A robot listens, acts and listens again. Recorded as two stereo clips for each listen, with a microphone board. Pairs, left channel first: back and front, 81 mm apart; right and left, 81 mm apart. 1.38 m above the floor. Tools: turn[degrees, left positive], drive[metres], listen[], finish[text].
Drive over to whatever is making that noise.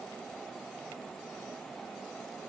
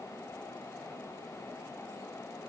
Action: listen[]
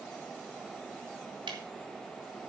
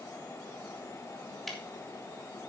Action: drive[1.0]
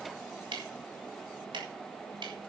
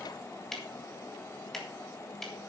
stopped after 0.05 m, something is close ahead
Action: finish[Something is in my way. I am facing the ticking but have not reached it.]